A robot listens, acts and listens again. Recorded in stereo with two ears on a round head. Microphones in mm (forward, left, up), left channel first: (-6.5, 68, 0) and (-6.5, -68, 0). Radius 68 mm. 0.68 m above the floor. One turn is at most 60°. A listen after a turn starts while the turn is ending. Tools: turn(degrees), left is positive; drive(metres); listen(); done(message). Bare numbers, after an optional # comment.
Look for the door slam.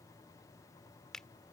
listen()
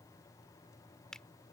listen()
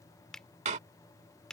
# The door slam: about 45° right or 135° right.
turn(-45)
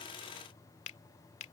listen()
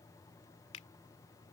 done("I heard a door slam, but can't make it out now. It was about straight ahead or 90° right.")